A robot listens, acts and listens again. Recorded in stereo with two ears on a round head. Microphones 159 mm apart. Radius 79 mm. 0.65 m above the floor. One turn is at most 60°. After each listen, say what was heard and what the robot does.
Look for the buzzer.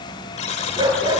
The buzzer: about 40° left or 140° left. Turn 40° left.
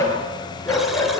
Keep listening.
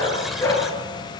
Keep listening.
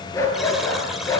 I heard a buzzer, but can't make it out now. It was about straight ahead or 100° left.